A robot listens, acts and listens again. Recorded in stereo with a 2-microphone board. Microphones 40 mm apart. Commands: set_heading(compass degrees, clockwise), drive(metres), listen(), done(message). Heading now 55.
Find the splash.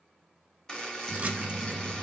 set_heading(90)
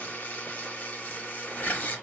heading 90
listen()
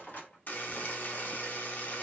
done("I heard a splash, but can't make it out now. It was about straight ahead or 110° right.")